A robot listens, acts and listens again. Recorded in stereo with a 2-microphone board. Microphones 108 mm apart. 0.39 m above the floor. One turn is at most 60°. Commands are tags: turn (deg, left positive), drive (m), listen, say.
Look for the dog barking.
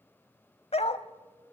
<turn deg="60"/>
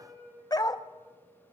<turn deg="40"/>
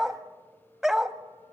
<say>Found it: a dog barking, straight ahead.</say>